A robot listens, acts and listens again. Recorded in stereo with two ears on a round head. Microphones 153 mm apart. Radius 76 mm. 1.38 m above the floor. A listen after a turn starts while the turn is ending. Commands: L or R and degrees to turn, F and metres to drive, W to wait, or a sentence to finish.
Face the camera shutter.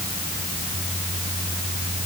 W
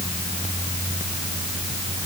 W
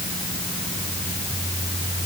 I can't make out a camera shutter.